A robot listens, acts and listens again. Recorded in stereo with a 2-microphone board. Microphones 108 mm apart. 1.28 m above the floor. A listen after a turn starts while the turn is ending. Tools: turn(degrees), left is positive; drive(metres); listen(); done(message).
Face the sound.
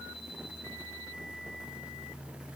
listen()
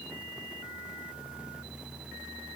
listen()
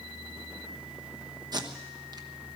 turn(degrees=-40)
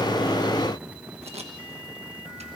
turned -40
turn(degrees=-100)
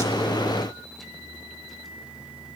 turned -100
listen()
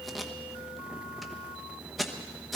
done("Found it: tape being pulled, straight ahead, 1 to 2 m away.")